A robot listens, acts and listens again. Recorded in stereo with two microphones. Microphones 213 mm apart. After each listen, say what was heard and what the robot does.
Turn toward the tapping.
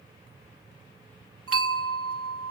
Keep listening.
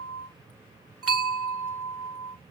Keep listening.
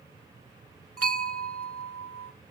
I can't make out tapping, only a bell.